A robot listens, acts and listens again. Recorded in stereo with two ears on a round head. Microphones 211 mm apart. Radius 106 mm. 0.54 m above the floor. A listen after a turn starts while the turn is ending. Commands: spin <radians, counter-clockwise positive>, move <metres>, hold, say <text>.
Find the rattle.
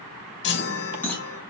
spin 0.52
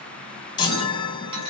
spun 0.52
hold
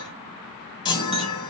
hold
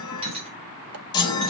spin -0.44
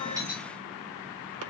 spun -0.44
hold
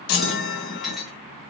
say Facing the rattle, 2 to 4 m away.